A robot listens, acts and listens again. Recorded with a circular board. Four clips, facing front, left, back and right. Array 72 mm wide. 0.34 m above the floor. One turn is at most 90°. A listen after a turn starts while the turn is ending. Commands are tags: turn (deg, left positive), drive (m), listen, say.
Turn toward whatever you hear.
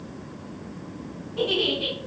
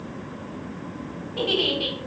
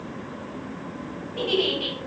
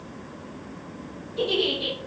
<turn deg="90"/>
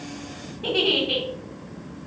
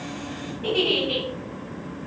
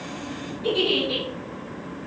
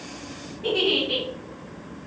<turn deg="15"/>
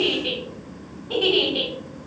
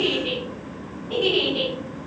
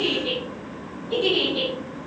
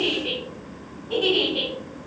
<say>Facing the giggle.</say>